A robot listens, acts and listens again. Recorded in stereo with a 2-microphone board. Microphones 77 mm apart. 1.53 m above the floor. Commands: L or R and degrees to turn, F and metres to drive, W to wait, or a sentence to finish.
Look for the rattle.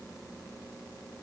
W
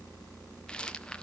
L30
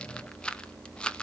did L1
L30
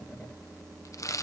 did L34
L135
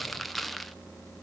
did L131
Facing the rattle.